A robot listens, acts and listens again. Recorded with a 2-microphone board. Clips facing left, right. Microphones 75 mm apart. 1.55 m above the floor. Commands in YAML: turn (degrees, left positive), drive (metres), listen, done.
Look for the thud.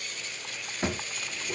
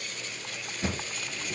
turn: 55
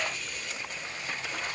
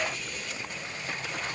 listen: true
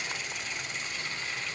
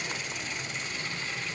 done: "I heard a thud, but can't make it out now. It was about straight ahead or 70° left."